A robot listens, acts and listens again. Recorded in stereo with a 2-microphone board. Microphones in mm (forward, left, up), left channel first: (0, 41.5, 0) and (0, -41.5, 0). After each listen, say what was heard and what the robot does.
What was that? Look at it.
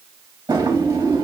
The drawer: about 45° right or 135° right. Turn 45° right.
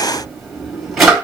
Facing the drawer.